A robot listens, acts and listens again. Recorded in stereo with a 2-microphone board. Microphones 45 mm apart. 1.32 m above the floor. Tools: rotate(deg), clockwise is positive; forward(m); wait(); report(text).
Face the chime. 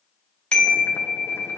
rotate(-25)
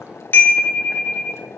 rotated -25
rotate(-130)
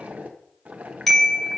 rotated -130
report("Facing the chime.")